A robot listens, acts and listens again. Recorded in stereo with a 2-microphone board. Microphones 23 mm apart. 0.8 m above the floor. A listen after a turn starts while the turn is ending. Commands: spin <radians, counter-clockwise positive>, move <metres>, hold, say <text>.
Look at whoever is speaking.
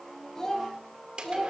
spin 0.44
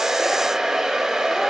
hold
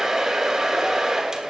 hold
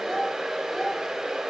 spin 0.52
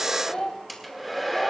spin 2.27
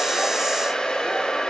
hold
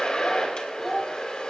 say Facing the child speaking.